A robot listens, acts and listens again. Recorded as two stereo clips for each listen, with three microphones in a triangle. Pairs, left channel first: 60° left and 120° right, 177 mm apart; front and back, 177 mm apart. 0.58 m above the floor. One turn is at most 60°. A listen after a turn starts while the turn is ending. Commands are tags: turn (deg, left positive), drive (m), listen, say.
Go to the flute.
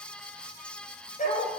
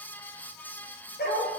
<listen/>
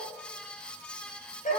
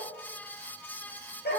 <listen/>
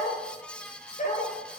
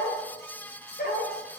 <say>I can't make out a flute to turn to.</say>